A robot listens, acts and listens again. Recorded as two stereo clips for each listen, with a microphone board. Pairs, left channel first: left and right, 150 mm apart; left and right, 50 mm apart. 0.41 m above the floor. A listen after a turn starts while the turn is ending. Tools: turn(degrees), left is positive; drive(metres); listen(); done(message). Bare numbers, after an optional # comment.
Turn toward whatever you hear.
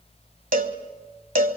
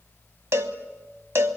# The cowbell: about 65° right or 115° right.
turn(-65)
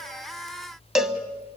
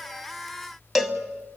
done("Found it: a cowbell, straight ahead.")